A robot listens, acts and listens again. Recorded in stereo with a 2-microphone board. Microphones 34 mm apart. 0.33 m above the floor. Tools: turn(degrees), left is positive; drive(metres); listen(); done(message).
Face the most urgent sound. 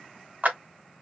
listen()
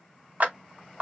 listen()
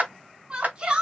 turn(degrees=-30)
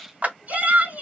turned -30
turn(degrees=-115)
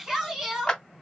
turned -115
turn(degrees=-15)
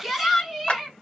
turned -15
done("Found it: a shout, straight ahead.")